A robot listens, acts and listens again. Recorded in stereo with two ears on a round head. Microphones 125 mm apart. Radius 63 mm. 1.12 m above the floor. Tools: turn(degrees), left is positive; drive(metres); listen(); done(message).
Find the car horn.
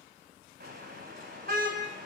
turn(degrees=-65)
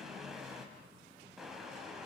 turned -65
done("Found it: a car horn, straight ahead.")